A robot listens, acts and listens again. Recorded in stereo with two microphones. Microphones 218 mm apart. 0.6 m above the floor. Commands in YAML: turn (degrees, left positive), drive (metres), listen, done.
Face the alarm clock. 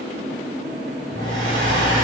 turn: 20
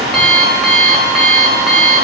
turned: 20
done: "Facing the alarm clock, under 1 m away."